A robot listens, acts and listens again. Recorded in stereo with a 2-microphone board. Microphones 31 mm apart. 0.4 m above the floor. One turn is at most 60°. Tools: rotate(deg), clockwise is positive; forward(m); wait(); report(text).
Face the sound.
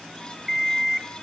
rotate(-30)
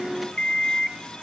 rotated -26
rotate(-60)
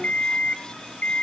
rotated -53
rotate(-60)
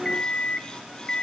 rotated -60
rotate(-30)
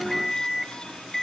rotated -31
report("Facing the alarm clock.")